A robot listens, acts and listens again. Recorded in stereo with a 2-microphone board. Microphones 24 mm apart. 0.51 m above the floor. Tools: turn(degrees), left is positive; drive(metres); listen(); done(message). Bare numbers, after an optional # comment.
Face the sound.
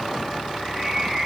turn(30)
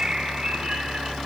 # So it is at 30° right.
turn(-30)
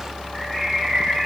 done("Found it: a bird, straight ahead, 2 to 4 m away.")